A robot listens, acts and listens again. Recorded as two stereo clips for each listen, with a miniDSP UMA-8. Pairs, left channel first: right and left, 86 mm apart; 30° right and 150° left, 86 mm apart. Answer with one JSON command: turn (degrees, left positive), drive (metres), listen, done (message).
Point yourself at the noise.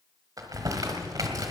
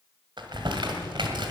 {"turn": 135}
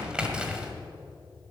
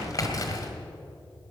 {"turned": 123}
{"turn": 10}
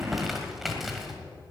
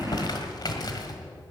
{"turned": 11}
{"done": "Facing the crumpling."}